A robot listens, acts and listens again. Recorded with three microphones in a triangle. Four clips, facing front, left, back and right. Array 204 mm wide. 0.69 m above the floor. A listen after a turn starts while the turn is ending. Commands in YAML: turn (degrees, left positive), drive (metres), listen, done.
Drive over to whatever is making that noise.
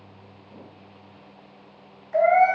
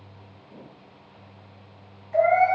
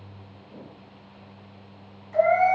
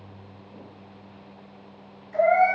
turn: 45
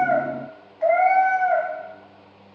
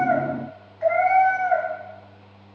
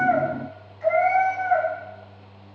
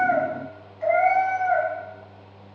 turn: 10
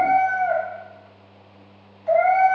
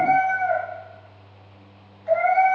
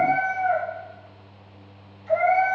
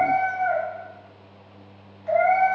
drive: 1.0
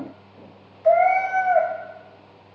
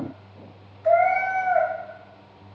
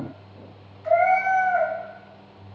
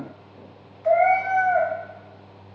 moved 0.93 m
drive: 1.0
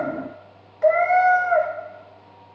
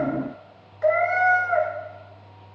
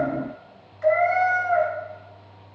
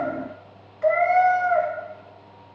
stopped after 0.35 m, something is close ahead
turn: 10
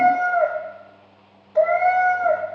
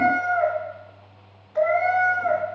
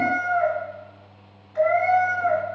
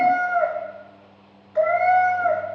done: "Arrived at the cat meowing, straight ahead."